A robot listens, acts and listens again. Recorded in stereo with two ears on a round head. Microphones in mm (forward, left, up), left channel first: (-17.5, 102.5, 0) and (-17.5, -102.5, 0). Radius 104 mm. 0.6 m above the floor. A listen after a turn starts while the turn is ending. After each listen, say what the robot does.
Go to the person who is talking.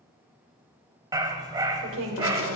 Turn 60° right.
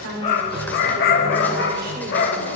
Keep listening.
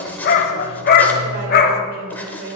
Turn 45° right.
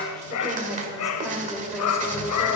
Drive 1.0 m forward.
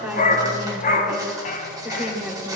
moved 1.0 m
Drive 1.0 m forward.
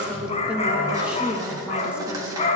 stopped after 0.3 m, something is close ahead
Arrived at the woman speaking, straight ahead.